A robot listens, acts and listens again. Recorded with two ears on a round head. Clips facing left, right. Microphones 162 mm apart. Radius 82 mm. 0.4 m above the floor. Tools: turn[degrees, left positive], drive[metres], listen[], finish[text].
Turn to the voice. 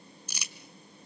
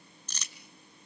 Action: listen[]
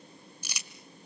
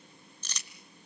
Action: listen[]
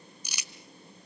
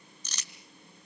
Action: finish[I can't make out anyone speaking to turn to.]